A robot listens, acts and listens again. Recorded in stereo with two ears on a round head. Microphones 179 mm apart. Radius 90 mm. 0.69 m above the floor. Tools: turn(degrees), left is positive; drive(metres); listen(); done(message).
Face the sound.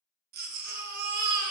turn(degrees=-45)
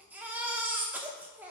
turn(degrees=-10)
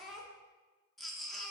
done("Found it: a baby crying, straight ahead, under 1 m away.")